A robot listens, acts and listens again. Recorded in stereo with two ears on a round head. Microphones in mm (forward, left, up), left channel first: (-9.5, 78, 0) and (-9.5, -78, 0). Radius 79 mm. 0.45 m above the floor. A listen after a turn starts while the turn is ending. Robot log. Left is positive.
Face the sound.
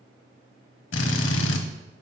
cmd yaw +90
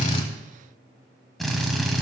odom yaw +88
end: Facing the drill.